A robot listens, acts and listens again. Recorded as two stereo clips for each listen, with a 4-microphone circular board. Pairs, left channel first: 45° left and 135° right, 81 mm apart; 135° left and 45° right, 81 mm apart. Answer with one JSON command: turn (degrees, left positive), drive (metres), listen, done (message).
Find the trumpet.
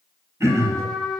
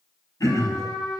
{"turn": 130}
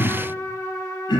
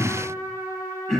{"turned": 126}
{"done": "Found it: a trumpet, straight ahead."}